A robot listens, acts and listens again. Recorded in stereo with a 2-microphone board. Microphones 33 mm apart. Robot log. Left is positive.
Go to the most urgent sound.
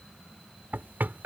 cmd idle
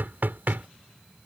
cmd idle
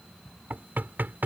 end: I can't make out anything urgent to turn to.